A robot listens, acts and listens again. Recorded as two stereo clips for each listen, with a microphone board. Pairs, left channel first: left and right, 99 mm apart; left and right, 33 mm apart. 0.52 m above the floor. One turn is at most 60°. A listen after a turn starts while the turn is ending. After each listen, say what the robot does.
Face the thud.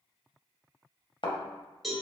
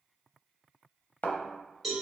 Turn 55° left.
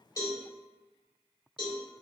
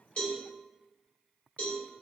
Keep listening.
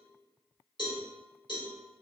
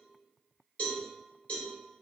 I heard a thud, but can't make it out now. It was about straight ahead or 70° left.